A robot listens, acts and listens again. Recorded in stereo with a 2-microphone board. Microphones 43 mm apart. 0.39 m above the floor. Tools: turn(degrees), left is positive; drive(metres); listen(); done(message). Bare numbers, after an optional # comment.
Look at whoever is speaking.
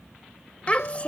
# The child speaking: about 30° left or 150° left.
turn(30)
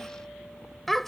done("Facing the child speaking.")